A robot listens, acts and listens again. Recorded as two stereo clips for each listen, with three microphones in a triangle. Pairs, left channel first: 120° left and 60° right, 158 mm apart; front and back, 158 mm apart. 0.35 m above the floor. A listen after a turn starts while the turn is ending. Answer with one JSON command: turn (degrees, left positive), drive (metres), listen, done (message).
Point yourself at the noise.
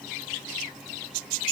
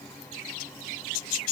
{"listen": true}
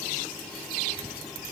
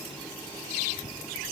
{"listen": true}
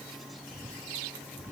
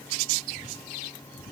{"turn": 10}
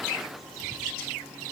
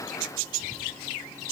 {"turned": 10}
{"done": "Facing the whispering, 2 to 4 m away."}